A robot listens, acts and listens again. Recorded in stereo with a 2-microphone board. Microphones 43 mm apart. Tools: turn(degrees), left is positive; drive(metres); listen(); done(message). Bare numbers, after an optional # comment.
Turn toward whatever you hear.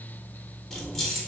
turn(30)
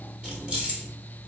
# So it is at 25° right.
turn(-25)
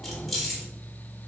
done("Found it: keys jangling, straight ahead, 1 to 2 m away.")